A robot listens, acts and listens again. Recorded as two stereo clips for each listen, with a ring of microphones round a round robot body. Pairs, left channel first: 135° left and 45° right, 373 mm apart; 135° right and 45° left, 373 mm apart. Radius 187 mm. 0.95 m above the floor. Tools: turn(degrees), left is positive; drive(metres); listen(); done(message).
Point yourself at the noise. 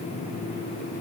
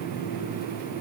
listen()
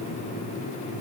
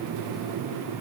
listen()
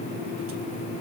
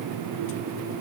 done("I can't make out anything.")